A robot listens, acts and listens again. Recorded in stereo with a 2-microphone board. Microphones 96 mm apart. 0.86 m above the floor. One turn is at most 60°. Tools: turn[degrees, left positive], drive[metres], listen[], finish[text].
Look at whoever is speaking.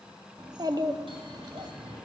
Thought: The child speaking: about 45° right or 135° right.
Action: turn[-45]
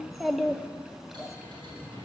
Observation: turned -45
Action: finish[Found it: a child speaking, straight ahead, under 1 m away.]